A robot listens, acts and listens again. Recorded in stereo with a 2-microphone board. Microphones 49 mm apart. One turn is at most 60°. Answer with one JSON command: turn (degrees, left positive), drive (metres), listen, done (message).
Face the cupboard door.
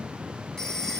{"listen": true}
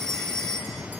{"listen": true}
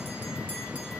{"done": "I can't make out a cupboard door to turn to."}